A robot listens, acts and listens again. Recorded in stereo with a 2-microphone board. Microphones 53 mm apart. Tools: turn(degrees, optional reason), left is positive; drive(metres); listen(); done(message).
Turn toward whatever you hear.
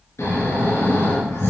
turn(degrees=65, reason="The snoring: about 65° left or 115° left.")
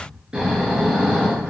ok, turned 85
turn(degrees=-15, reason="So it is at 15° right.")
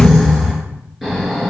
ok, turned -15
done("Facing the snoring, over 4 m away.")